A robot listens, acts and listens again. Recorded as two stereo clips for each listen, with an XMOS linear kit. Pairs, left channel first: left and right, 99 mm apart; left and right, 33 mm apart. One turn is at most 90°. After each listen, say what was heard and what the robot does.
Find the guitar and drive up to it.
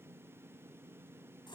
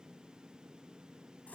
Keep listening.
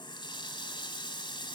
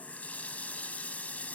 Keep listening.
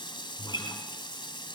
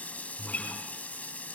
The guitar: about 55° left or 125° left. Turn 55° left.
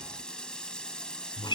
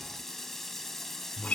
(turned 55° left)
So it is at 65° left. Turn 65° left.
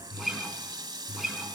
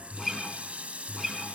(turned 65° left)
Drive 1.0 m forward.
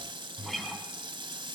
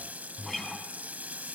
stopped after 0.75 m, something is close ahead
Blocked. The guitar is further on, straight ahead.